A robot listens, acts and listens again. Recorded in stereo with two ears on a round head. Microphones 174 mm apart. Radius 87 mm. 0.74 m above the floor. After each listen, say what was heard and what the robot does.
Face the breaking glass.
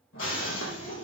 The breaking glass: about 75° left or 105° left. Turn 75° left.
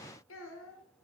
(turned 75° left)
Keep listening.
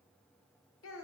I heard breaking glass, but can't make it out now. It was about straight ahead or 30° left.